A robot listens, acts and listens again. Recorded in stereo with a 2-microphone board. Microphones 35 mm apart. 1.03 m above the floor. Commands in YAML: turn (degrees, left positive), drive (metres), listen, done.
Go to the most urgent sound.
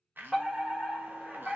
turn: -30
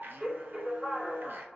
turn: -145
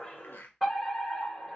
drive: 1.0
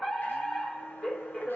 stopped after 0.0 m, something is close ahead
turn: 10
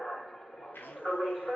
done: "Blocked. The fire alarm is further on, straight ahead."